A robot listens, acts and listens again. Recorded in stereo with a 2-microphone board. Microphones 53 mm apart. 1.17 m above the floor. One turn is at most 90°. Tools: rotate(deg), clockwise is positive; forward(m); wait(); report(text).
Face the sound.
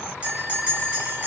rotate(30)
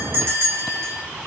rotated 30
rotate(90)
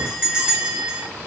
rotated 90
rotate(25)
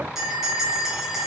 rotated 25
rotate(10)
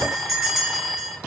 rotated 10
report("Found it: a bell, straight ahead.")